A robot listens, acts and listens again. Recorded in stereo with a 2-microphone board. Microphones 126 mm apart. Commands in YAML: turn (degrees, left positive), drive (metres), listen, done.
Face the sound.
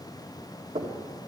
turn: -60
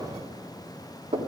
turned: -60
turn: -60
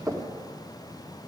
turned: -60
done: "Facing the knocking, 1 to 2 m away."